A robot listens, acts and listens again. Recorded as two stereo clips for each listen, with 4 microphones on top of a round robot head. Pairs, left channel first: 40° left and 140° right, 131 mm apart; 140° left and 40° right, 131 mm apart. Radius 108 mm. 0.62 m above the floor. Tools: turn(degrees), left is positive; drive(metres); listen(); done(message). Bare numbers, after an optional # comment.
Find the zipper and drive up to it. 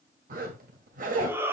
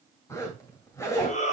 # The zipper: 150° right.
turn(-150)
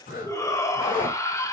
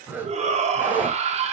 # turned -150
# The zipper is now 35° left.
turn(35)
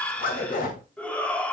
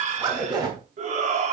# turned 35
# The zipper is now 20° left.
turn(20)
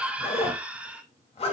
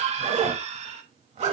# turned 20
drive(1.0)
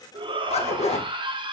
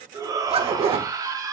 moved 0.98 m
drive(1.0)
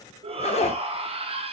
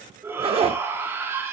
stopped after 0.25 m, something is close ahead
done("Arrived at the zipper, straight ahead.")